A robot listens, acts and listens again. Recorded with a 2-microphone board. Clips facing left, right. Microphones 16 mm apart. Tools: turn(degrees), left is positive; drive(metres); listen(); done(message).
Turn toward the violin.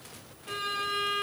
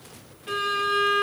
turn(degrees=-25)
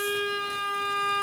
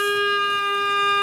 turn(degrees=-130)
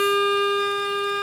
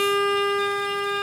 done("Found it: a violin, straight ahead, 1 to 2 m away.")